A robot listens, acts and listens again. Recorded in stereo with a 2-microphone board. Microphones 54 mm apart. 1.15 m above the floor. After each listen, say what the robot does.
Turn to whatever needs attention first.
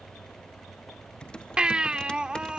Turn 15° right.
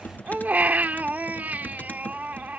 Turn 150° right.
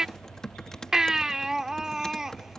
Turn 10° right.
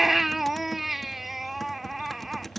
Facing the baby crying.